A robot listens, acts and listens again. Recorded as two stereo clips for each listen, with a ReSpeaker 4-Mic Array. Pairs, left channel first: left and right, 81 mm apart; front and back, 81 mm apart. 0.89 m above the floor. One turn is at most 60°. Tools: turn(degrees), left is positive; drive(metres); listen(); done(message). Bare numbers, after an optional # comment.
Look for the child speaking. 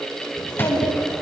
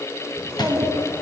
# The child speaking: 125° left.
turn(60)
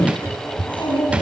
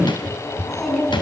# The child speaking is now 85° left.
turn(60)
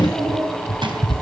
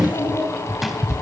# The child speaking is now 10° left.
turn(10)
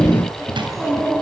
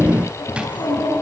done("Facing the child speaking.")